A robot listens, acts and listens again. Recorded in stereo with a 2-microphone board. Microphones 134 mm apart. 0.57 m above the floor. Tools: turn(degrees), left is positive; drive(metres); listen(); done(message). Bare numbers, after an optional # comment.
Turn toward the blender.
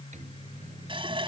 listen()
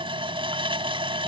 listen()
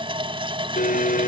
turn(90)
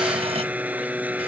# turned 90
# So it is at 10° right.
turn(-10)
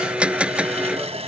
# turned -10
# The blender is now 10° right.
turn(-10)
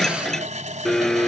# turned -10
done("Found it: a blender, straight ahead.")